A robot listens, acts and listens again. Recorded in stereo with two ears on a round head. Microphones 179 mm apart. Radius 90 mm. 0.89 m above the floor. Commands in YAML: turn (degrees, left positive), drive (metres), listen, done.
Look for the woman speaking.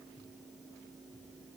listen: true
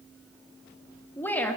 turn: 30
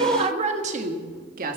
turn: -45
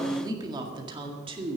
turn: -30
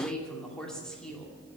done: "Facing the woman speaking."